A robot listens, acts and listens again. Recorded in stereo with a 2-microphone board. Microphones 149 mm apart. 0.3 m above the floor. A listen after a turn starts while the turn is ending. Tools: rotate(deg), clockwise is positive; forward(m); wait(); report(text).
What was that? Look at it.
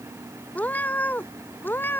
rotate(-30)
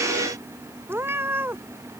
rotate(15)
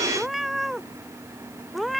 report("Found it: a cat meowing, straight ahead.")